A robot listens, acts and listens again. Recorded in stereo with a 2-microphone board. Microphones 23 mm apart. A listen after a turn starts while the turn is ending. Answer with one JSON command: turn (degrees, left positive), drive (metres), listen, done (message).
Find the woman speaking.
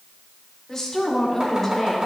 {"turn": 30}
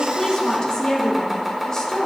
{"turn": 25}
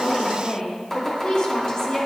{"turn": 145}
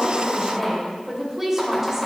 {"turn": -20}
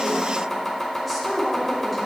{"done": "Facing the woman speaking."}